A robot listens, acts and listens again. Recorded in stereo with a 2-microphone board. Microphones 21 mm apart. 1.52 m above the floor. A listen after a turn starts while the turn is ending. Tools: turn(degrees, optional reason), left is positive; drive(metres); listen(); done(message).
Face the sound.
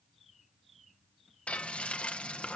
turn(degrees=70, reason="The frying: about 70° left or 110° left.")
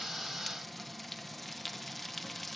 done("Found it: frying, straight ahead, 1 to 2 m away.")